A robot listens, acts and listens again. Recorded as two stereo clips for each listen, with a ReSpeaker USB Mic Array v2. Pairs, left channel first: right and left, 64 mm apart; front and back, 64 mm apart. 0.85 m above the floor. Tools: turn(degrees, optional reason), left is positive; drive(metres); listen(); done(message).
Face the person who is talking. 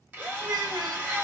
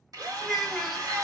turn(degrees=95, reason="The child speaking: 95° left.")
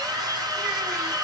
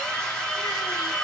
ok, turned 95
listen()
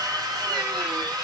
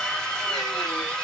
listen()
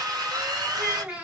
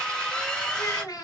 turn(degrees=20, reason="The child speaking is now 20° left.")
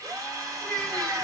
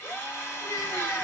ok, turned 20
done("Found it: a child speaking, straight ahead.")